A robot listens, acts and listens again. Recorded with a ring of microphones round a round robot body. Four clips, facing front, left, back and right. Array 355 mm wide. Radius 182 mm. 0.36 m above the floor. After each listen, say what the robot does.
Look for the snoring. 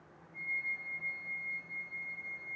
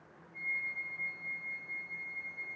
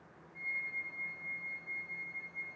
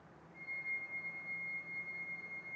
Keep listening.
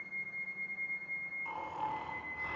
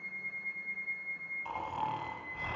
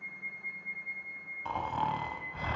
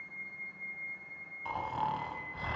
Turn 170° right.
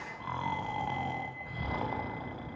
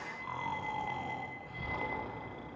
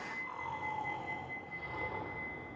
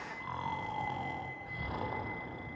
Turn 10° right.
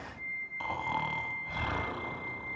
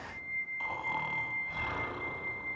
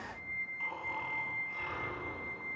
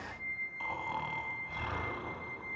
Facing the snoring, 1 to 2 m away.